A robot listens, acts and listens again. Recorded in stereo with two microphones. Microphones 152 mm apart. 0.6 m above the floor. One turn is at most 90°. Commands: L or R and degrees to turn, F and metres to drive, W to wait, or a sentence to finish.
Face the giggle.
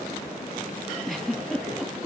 L30
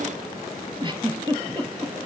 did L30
R30
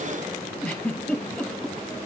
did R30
L10
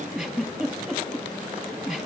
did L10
Facing the giggle.